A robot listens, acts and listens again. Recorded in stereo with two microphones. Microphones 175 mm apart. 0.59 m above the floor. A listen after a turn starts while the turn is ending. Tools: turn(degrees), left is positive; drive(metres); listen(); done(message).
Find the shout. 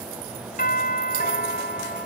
listen()
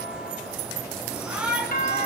turn(degrees=-30)
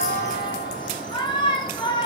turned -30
turn(degrees=25)
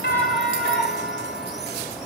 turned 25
done("Found it: a shout, straight ahead.")